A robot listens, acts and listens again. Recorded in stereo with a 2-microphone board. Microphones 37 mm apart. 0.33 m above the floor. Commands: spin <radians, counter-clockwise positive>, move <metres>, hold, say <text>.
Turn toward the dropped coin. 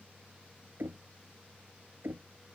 hold
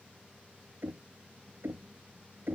hold
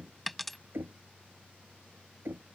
spin 0.52
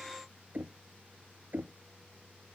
hold
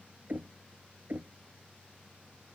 say I heard a dropped coin, but can't make it out now. It was about 30° right or 150° left.